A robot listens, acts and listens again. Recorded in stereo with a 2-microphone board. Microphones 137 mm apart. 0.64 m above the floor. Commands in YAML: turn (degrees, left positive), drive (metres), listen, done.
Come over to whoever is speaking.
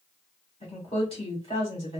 turn: 45
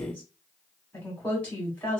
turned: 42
turn: 15
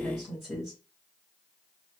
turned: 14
drive: 1.0
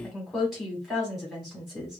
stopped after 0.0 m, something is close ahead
done: "Something is in my way. I am facing the woman speaking but have not reached it."